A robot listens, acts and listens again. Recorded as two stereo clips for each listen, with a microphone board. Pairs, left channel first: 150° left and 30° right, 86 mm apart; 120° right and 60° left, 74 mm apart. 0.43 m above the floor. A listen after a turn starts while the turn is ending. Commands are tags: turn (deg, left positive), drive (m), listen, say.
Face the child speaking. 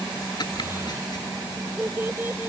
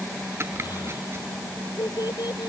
<turn deg="-95"/>
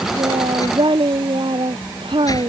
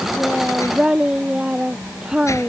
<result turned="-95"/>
<turn deg="-20"/>
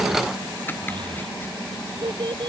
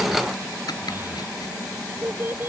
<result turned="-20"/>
<say>Facing the child speaking.</say>